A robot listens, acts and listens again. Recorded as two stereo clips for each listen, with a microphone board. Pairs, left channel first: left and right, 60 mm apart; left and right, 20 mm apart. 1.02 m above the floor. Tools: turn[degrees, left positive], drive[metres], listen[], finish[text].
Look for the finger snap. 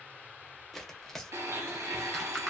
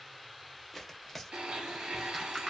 Action: listen[]
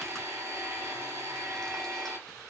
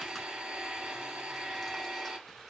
Action: listen[]
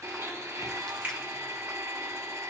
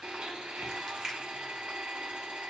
Thought: The finger snap: about 20° right or 160° right.
Action: turn[-20]
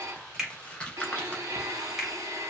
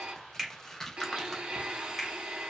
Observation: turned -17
Action: finish[Facing the finger snap, 1 to 2 m away.]